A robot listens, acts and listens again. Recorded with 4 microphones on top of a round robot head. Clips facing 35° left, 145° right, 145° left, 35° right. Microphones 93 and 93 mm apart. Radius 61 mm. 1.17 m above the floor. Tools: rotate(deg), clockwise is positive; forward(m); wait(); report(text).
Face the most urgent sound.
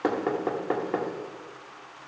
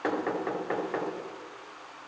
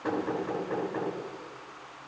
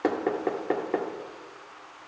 wait()
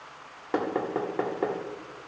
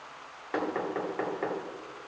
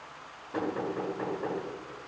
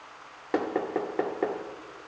wait()
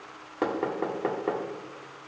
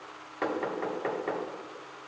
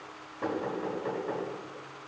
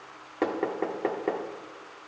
report("I can't make out anything urgent to turn to.")